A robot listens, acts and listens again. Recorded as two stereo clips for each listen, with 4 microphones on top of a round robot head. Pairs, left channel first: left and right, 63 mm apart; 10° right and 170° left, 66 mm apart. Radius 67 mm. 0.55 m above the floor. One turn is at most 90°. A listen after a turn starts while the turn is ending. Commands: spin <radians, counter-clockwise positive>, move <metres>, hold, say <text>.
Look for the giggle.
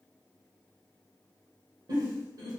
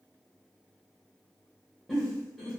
spin -1.57
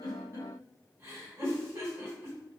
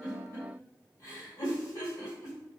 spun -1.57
spin -0.70
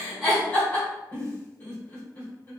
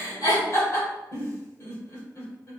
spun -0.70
spin 0.44
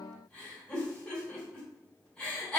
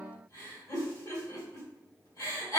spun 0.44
spin 0.17
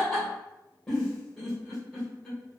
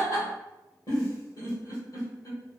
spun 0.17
say Facing the giggle.